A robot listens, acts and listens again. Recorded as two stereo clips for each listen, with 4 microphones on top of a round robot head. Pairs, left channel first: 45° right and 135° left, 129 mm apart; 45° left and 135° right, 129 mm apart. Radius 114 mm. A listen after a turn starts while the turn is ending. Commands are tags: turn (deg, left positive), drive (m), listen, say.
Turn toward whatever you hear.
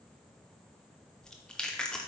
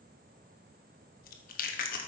<turn deg="40"/>
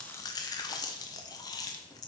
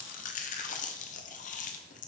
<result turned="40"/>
<turn deg="20"/>
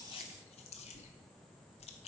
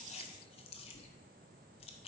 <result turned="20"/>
<say>Facing the chewing.</say>